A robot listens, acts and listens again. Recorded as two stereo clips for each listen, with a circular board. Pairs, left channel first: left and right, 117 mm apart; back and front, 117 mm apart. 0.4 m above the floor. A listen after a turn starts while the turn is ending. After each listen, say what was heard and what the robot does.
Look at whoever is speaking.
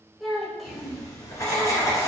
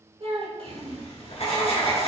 Found it: a child speaking, straight ahead, 1 to 2 m away.